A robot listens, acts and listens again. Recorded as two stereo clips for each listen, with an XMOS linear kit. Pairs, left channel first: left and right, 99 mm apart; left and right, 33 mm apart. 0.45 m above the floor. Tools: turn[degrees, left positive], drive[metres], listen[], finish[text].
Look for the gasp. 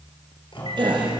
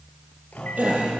Thought: The gasp: about 55° right or 125° right.
Action: turn[-55]
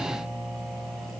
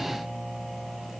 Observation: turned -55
Action: listen[]
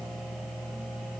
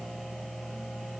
Action: finish[I heard a gasp, but can't make it out now. It was about straight ahead or 70° right.]